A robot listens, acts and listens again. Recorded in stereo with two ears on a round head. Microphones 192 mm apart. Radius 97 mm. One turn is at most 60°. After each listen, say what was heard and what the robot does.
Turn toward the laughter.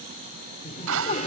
The laughter: about 35° left or 145° left. Turn 35° left.
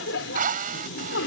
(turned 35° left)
So it is at 115° left. Turn 60° left.
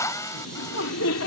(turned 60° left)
The laughter is now 70° left. Turn 60° left.
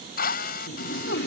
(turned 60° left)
The laughter is now 50° left. Turn 50° left.
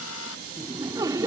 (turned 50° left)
The laughter is now 15° right. Turn 15° right.
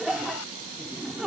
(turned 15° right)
Found it: laughter, straight ahead.